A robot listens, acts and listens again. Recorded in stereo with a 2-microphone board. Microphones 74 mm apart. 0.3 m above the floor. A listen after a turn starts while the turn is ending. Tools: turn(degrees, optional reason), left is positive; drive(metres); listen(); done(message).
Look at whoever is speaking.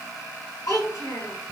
turn(degrees=50, reason="The child speaking: about 50° left or 130° left.")
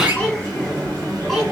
listen()
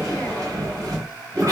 listen()
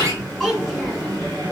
done("Facing the child speaking.")